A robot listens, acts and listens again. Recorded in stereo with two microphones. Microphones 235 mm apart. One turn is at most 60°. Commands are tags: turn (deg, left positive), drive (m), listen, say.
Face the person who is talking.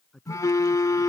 <turn deg="30"/>
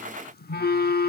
<listen/>
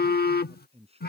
<turn deg="-25"/>
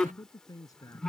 <turn deg="15"/>
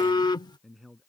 <say>Facing the man speaking.</say>